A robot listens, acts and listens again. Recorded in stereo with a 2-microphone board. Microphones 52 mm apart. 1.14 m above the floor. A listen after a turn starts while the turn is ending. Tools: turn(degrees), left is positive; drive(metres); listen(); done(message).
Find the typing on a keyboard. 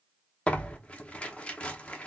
listen()
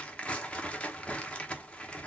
listen()
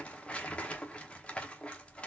done("I can't make out typing on a keyboard, only tearing paper.")